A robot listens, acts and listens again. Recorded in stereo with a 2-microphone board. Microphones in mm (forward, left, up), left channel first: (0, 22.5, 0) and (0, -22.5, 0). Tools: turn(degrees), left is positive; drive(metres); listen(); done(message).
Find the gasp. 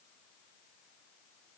listen()
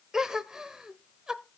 turn(degrees=-30)
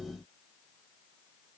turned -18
listen()
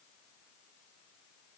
done("I heard a gasp, but can't make it out now. It was about 5° left or 150° right.")